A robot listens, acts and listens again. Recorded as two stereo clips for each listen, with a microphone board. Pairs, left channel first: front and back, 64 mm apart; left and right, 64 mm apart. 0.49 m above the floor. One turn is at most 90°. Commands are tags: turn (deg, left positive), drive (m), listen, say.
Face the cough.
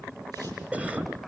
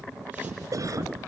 <turn deg="-90"/>
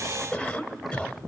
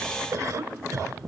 <turn deg="-75"/>
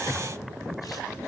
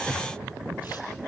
<listen/>
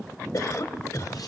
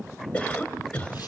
<turn deg="20"/>
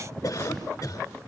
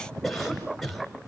<say>Facing the cough.</say>